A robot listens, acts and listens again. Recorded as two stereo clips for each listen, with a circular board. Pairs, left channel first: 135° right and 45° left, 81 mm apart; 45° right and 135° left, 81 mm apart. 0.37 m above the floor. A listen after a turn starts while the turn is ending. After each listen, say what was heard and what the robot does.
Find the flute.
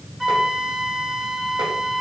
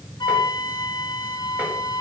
The flute: 40° right. Turn 40° right.
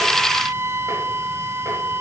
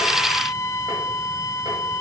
Facing the flute, under 1 m away.